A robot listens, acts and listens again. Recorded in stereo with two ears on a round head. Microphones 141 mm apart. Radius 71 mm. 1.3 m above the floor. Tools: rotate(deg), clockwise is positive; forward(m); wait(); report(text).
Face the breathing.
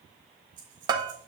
rotate(90)
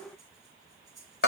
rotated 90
report("Found it: breathing, straight ahead.")